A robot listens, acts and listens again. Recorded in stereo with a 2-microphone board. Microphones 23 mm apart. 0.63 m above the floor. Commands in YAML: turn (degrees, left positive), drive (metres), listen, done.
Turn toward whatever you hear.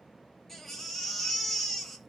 turn: 30
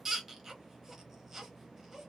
turn: -20
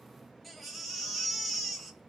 done: "Found it: a baby crying, straight ahead, under 1 m away."